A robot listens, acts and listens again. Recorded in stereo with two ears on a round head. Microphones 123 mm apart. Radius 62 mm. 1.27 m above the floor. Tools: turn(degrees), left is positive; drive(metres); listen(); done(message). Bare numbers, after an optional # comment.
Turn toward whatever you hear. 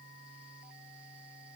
listen()
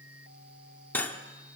turn(30)
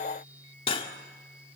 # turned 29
# So it is at 135° left.
turn(135)
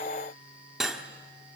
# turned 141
done("Found it: cutlery clinking, straight ahead, 1 to 2 m away.")